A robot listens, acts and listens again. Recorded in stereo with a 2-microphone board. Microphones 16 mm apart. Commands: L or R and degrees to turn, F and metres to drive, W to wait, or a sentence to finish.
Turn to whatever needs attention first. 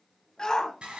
L35
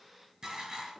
W
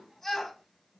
L10
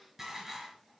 W
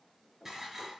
W
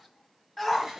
Found it: a shout, straight ahead, 1 to 2 m away.